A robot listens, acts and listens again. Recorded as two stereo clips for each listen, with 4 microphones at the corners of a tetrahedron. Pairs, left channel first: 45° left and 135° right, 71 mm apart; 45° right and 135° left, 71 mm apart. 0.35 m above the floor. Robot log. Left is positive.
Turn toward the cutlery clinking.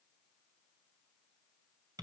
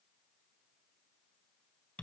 cmd idle
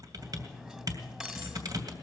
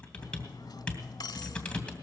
note: The cutlery clinking: 55° right.
cmd yaw -55
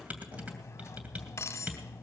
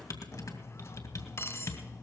end: Facing the cutlery clinking, 1 to 2 m away.